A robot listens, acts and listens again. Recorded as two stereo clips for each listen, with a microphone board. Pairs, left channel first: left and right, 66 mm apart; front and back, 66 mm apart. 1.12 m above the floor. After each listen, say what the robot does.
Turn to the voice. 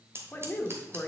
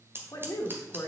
Turn 30° left.
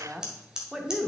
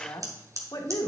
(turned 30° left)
Turn 10° right.
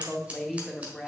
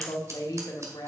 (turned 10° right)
Facing the woman speaking.